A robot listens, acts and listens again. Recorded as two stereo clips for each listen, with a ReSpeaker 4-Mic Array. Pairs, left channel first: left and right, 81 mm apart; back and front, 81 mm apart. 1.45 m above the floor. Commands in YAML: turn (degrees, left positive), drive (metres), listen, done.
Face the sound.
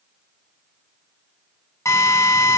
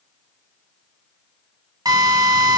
turn: 40
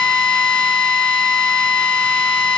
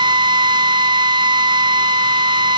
turn: 15
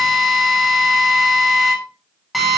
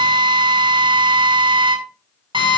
done: "Found it: a drill, straight ahead, over 4 m away."